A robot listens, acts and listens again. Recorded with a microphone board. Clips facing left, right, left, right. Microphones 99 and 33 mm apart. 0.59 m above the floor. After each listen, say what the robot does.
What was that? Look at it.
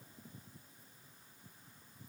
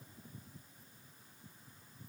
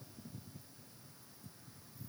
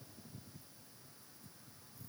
Keep listening.
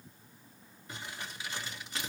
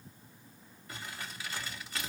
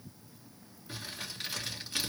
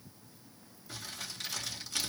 Turn 20° left.
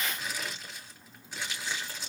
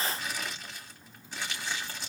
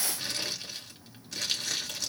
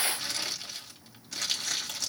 Facing the crumpling, 2 to 4 m away.